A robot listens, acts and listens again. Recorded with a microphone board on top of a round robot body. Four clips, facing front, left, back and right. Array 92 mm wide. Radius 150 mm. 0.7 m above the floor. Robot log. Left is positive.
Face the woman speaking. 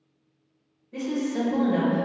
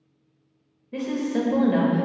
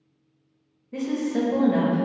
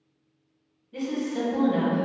note: The woman speaking: 120° left.
cmd yaw +120
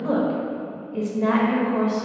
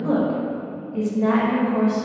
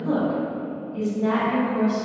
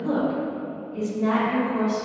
note: The woman speaking is now 35° left.
cmd yaw +35
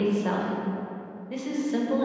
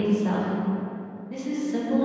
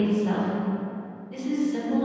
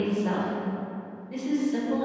note: The woman speaking is now 10° left.
cmd yaw +10
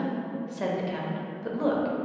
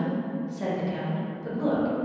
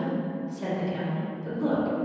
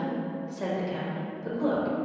end: Found it: a woman speaking, straight ahead.